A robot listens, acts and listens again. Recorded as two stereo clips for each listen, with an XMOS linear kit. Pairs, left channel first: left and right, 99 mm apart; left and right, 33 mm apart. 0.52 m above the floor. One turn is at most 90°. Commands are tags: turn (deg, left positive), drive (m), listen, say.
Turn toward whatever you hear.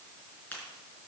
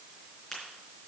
<turn deg="15"/>
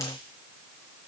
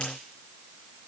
<listen/>
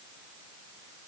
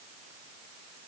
<say>I heard a crack, but can't make it out now. It was about straight ahead or 150° left.</say>